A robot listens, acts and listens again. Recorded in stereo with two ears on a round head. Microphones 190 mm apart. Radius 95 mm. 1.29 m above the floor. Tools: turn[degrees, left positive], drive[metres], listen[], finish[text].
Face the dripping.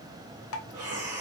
Thought: The dripping: about 65° left or 115° left.
Action: turn[65]
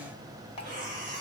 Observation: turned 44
Thought: So it is at 25° left.
Action: turn[25]
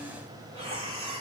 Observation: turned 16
Thought: Nothing new. It was at 10° left.
Action: turn[10]
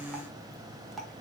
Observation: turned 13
Action: finish[Found it: dripping, straight ahead.]